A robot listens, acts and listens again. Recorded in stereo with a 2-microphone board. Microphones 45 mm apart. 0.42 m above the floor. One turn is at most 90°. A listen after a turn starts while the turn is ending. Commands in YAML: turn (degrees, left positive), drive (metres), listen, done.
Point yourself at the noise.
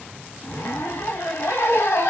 turn: 70
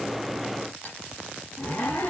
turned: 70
turn: 35
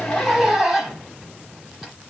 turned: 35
done: "Found it: a zipper, straight ahead."